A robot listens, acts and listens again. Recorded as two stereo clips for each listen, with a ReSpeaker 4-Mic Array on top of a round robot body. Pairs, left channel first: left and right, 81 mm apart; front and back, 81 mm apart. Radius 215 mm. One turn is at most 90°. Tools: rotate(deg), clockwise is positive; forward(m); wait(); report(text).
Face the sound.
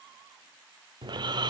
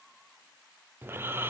rotate(90)
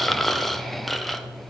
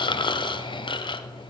report("Facing the snoring.")